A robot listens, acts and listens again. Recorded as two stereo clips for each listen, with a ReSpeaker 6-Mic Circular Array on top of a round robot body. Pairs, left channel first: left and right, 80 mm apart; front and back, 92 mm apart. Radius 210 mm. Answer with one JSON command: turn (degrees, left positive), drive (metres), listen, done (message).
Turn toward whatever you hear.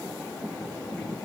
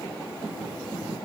{"listen": true}
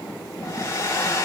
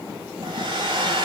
{"turn": 145}
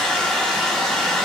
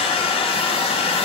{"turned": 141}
{"done": "Facing the hair dryer."}